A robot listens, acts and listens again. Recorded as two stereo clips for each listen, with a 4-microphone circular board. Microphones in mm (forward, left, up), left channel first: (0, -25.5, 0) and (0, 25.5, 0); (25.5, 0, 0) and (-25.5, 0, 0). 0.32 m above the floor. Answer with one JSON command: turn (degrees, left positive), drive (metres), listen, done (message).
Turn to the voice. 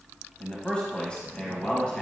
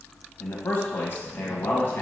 {"turn": -25}
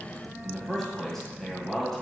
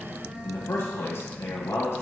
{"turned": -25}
{"done": "Found it: a man speaking, straight ahead."}